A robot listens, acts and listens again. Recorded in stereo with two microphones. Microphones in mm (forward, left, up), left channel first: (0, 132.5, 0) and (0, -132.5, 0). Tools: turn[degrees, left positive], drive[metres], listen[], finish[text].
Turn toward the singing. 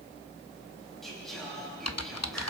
Action: turn[30]
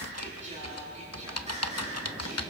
Thought: So it is at 25° right.
Action: turn[-25]
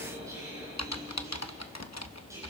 Action: listen[]
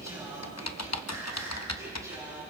Thought: The singing is now 10° right.
Action: turn[-10]
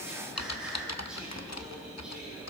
Action: finish[Facing the singing.]